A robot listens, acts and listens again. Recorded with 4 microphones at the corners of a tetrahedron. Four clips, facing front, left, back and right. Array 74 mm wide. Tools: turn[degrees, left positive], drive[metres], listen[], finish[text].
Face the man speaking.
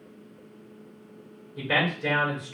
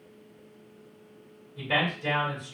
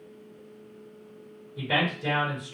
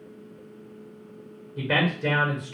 Thought: The man speaking: 90° right.
Action: turn[-90]
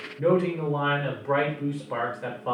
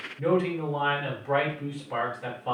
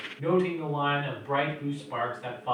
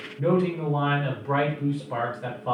Thought: The man speaking is now 10° right.
Action: turn[-10]
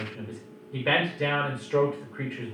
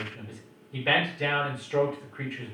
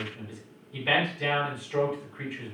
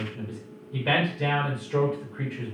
Action: finish[Found it: a man speaking, straight ahead, 1 to 2 m away.]